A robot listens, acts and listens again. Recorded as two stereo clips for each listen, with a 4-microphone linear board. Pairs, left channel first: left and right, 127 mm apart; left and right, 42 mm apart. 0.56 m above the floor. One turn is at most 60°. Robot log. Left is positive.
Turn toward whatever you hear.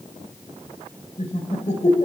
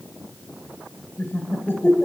note: The laughter: about 70° left or 110° left.
cmd yaw +60
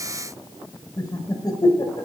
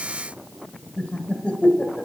note: So it is at 35° left.
cmd yaw +35
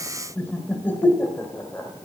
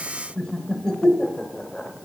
note: The laughter is now 20° left.
cmd yaw +20
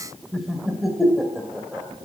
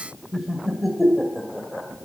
end: Found it: laughter, straight ahead.